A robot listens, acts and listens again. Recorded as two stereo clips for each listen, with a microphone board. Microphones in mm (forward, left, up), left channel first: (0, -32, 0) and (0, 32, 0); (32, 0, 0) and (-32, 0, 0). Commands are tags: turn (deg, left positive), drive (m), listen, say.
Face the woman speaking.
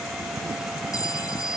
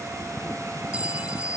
<listen/>
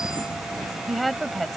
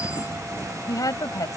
<say>Facing the woman speaking.</say>